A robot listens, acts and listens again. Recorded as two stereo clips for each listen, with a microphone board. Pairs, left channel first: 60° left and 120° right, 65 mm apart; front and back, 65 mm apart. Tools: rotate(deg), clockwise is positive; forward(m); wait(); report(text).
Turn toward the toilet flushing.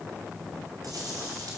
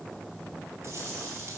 wait()
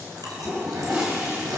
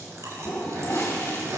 rotate(55)
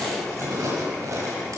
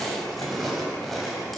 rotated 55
wait()
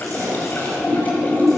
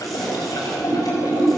report("Found it: a toilet flushing, straight ahead, over 4 m away.")